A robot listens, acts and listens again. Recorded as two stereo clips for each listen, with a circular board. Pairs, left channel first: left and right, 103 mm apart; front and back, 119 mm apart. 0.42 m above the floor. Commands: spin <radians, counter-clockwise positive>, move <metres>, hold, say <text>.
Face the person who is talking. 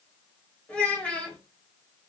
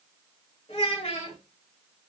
spin 0.26
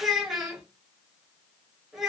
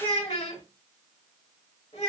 say Facing the child speaking.